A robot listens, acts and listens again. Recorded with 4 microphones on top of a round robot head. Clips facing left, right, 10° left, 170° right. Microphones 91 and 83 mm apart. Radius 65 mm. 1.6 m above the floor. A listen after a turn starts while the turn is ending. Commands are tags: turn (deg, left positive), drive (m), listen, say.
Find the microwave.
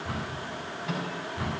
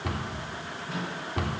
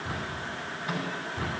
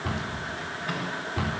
<turn deg="85"/>
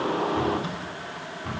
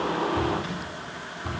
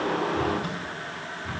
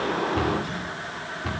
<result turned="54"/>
<turn deg="30"/>
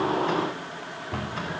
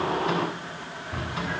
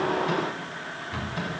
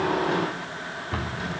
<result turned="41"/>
<turn deg="-10"/>
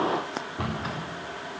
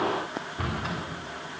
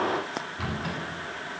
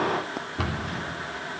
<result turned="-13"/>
<say>I heard a microwave from this way, but can't make it out now.</say>